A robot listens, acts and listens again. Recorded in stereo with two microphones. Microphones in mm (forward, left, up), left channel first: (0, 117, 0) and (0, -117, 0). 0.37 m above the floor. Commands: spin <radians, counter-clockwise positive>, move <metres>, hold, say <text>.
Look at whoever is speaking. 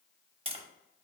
hold
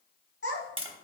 spin 1.22
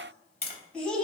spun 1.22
say Facing the child speaking, 1 to 2 m away.